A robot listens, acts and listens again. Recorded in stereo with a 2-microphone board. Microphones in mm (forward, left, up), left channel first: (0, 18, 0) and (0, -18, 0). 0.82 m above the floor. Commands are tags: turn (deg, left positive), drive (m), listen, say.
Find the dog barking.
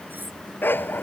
<turn deg="90"/>
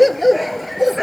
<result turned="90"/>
<say>Found it: a dog barking, straight ahead.</say>